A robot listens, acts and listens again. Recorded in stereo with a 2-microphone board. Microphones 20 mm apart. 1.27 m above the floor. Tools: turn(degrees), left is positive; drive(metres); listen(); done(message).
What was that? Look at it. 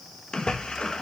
turn(degrees=40)
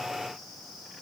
listen()
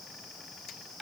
done("I heard a splash, but can't make it out now. It was about straight ahead or 100° left.")